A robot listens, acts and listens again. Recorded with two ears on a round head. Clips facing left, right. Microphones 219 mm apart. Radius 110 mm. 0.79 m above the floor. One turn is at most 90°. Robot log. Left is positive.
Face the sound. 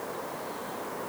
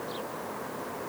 cmd idle
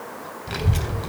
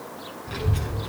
note: The child speaking: about 70° left or 110° left.
cmd yaw +70
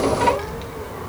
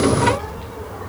note: So it is at 25° left.
cmd yaw +25
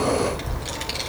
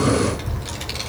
end: Found it: a child speaking, straight ahead, 2 to 4 m away.